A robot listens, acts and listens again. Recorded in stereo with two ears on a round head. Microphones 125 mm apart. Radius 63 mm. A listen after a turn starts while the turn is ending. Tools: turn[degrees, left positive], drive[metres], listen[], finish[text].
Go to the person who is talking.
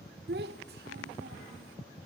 Action: turn[-90]
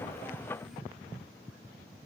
Action: listen[]
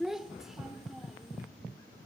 Action: drive[1.0]
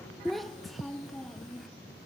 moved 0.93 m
Action: drive[1.0]
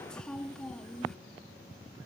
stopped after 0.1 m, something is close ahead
Action: finish[Arrived at the child speaking, straight ahead.]